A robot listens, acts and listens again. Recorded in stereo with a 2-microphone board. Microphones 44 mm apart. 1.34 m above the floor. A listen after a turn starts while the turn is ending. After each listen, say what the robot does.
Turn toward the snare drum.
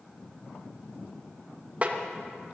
Turn 40° right.
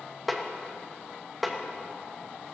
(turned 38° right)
Facing the snare drum, 1 to 2 m away.